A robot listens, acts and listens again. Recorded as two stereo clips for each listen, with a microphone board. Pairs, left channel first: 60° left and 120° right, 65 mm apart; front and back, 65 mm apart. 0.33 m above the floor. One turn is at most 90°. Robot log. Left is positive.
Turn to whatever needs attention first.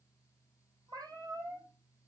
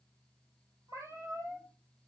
cmd idle
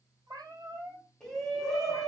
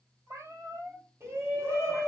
note: The shout: 140° left.
cmd yaw +90
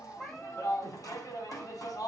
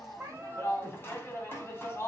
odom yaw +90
note: The shout is now 50° left.
cmd yaw +50
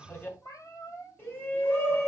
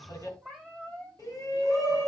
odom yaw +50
end: Facing the shout.